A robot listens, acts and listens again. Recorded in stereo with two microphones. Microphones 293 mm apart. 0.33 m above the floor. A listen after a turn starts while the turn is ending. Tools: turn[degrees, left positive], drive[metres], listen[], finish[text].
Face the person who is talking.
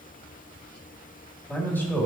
Action: turn[30]
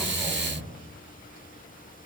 Thought: So it is at 145° left.
Action: turn[145]
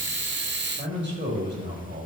Thought: The man speaking is now 45° right.
Action: turn[-45]
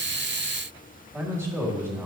Thought: The man speaking is now 10° right.
Action: turn[-10]
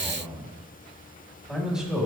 Action: finish[Found it: a man speaking, straight ahead.]